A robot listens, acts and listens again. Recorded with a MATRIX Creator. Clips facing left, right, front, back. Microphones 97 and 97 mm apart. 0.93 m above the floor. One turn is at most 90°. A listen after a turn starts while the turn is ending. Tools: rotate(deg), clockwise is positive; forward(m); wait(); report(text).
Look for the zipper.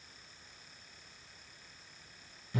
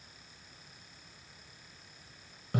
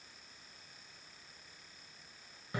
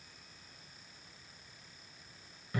wait()
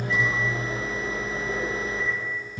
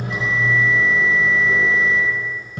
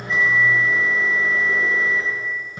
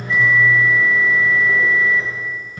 wait()
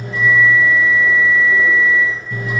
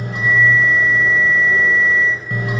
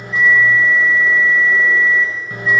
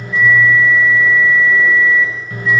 report("I can't make out a zipper to turn to.")